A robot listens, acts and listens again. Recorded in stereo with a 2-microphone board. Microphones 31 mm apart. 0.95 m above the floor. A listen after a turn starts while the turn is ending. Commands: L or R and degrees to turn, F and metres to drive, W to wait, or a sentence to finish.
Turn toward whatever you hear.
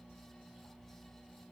W
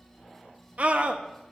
R50
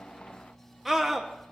Found it: a scream, straight ahead.